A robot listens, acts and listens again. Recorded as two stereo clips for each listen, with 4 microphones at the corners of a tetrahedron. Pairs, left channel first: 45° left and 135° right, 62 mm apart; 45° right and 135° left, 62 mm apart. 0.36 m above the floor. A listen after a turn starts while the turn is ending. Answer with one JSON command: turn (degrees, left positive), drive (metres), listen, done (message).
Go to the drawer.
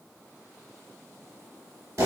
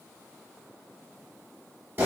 {"listen": true}
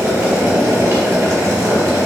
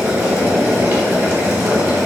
{"listen": true}
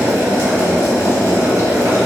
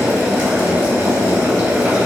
{"done": "I can't make out a drawer, only boiling."}